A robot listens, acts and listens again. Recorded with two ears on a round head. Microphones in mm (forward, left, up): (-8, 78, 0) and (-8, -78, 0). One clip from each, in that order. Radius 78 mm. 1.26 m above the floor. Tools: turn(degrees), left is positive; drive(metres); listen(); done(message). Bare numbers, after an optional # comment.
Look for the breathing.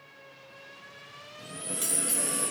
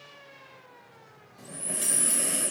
# The breathing: about 30° right or 150° right.
turn(-30)
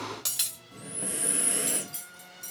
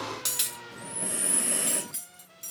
done("Facing the breathing.")